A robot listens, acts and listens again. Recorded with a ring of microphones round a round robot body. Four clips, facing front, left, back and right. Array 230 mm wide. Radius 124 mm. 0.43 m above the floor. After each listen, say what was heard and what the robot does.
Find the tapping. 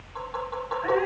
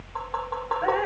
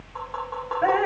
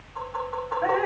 The tapping: 105° left. Turn 105° left.
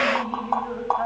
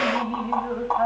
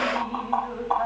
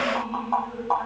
Facing the tapping.